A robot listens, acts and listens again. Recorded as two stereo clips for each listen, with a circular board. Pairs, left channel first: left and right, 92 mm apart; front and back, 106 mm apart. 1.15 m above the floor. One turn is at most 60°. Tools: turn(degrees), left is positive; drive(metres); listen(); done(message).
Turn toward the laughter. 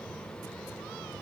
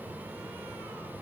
listen()
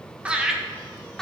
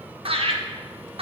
turn(degrees=60)
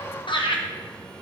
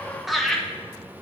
turn(degrees=60)
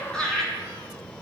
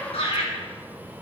done("Found it: laughter, straight ahead, 1 to 2 m away.")